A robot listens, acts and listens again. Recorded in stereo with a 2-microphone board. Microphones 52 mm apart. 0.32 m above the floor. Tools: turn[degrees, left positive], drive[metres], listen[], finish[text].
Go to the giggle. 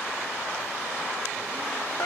Action: listen[]
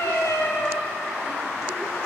Action: listen[]
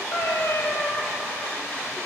Action: finish[I can't make out a giggle to turn to.]